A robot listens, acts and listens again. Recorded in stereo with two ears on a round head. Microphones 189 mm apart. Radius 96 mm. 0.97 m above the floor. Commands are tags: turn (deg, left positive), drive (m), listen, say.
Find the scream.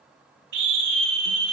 <turn deg="-60"/>
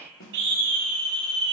<turn deg="-55"/>
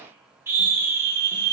<turn deg="-10"/>
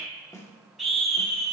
<say>Facing the scream.</say>